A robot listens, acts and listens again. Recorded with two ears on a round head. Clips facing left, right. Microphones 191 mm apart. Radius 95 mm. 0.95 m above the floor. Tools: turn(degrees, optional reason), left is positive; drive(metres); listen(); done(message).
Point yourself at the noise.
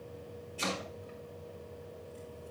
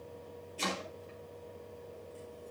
turn(degrees=30)
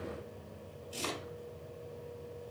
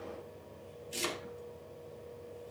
turn(degrees=-30, reason="So it is at 30° right.")
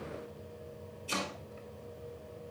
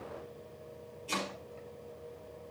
done("Found it: chopping, straight ahead, over 4 m away.")